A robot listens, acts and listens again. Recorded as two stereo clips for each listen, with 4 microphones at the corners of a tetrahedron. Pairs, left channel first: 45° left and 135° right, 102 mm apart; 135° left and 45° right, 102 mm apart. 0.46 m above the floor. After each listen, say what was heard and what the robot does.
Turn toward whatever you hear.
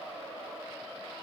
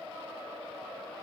Keep listening.
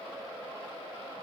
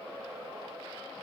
Keep listening.
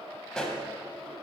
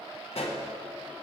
The pop: 125° left. Turn 125° left.
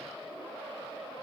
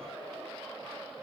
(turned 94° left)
Nothing new. It was at 35° left. Turn 35° left.
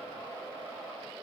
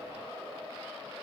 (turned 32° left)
Facing where the pop came from. I can't hear it now.